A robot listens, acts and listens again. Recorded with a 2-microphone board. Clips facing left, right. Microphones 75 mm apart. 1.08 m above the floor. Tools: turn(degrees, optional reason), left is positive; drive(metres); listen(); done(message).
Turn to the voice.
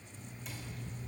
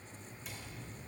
listen()
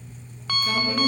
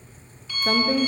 turn(degrees=-55, reason="The woman speaking: about 55° right or 125° right.")
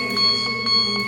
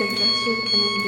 turn(degrees=-70, reason="So it is at 70° right.")
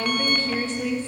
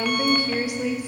turn(degrees=-15, reason="The woman speaking is now 15° right.")
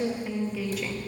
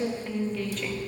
done("Facing the woman speaking, 1 to 2 m away.")